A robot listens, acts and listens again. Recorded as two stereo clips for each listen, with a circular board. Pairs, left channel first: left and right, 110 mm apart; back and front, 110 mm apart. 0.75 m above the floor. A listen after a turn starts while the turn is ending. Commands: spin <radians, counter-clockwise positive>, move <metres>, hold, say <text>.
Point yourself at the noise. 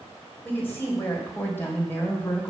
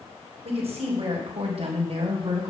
spin 0.35
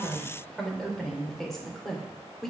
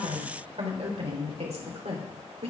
say Facing the woman speaking, 2 to 4 m away.